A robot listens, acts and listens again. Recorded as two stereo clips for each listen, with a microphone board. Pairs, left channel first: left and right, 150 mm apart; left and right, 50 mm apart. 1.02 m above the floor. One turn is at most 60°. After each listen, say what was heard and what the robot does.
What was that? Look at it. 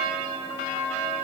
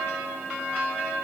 Keep listening.
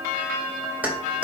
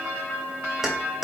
Turn 30° right.
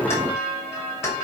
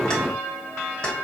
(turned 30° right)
So it is at 20° left. Turn 20° left.
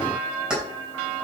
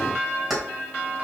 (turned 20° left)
Facing the keys jangling.